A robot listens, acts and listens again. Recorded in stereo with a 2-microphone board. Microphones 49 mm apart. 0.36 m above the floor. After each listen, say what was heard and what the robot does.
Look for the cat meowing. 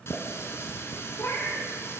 The cat meowing: about 50° left or 130° left. Turn 50° left.
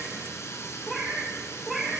Facing the cat meowing, 2 to 4 m away.